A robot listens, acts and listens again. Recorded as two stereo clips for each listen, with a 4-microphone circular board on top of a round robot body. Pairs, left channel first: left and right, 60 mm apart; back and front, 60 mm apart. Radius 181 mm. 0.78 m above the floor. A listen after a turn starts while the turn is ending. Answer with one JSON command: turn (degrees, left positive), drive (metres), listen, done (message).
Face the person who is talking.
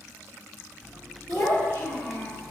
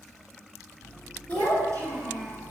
{"turn": 25}
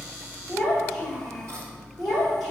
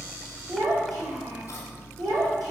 {"done": "Facing the child speaking."}